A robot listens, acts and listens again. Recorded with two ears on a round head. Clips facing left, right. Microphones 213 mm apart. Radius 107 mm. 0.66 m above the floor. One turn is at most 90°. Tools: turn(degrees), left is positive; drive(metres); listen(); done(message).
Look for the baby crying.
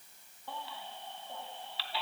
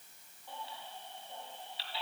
turn(degrees=55)
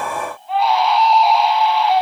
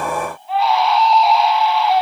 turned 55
done("Facing the baby crying.")